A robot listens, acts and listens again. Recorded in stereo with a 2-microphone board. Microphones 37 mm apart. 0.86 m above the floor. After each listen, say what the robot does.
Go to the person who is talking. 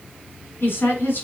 Turn 90° left.
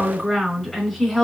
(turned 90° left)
Drive 1.0 m forward.
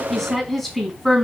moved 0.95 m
Drive 1.0 m forward.
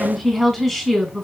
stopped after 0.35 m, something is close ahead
I am next to the woman speaking.